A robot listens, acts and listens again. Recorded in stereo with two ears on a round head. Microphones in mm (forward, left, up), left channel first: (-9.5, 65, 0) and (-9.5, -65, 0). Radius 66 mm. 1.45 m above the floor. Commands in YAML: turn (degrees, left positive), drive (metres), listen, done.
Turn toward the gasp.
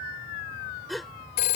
turn: 30
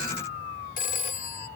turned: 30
listen: true
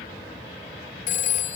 done: "I heard a gasp, but can't make it out now. It was about 30° right or 150° left."